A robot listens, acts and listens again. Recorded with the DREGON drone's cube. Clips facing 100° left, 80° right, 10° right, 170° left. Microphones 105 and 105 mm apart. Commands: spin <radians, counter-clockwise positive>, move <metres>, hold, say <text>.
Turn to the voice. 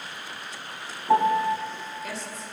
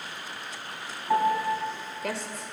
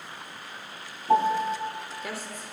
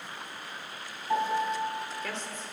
spin -1.48
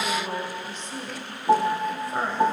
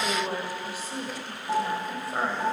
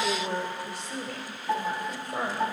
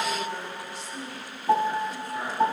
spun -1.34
spin 0.17
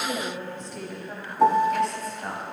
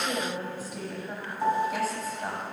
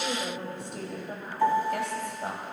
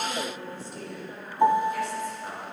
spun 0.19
say Found it: a woman speaking, straight ahead, 2 to 4 m away.